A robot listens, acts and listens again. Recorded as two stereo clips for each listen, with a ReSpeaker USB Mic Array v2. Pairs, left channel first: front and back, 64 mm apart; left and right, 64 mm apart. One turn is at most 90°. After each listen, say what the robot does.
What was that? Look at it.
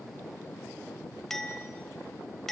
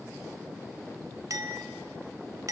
Turn 80° right.
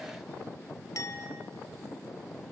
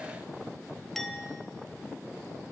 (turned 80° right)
Facing the clink.